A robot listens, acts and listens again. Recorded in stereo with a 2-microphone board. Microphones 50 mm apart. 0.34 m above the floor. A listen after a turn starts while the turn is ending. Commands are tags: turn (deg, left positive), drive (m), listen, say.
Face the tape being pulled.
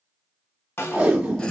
<turn deg="-20"/>
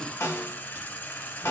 <listen/>
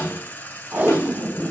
<turn deg="-140"/>
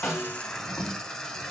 <say>Found it: tape being pulled, straight ahead, 1 to 2 m away.</say>